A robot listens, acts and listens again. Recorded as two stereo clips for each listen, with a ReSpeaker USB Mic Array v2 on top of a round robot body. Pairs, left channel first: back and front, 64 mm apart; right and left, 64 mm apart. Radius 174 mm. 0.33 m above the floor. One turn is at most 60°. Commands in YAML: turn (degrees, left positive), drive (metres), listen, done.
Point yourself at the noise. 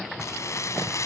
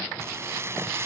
turn: 60
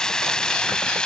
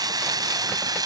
turn: 60
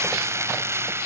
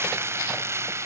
turn: 45
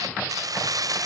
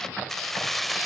done: "Facing the keys jangling."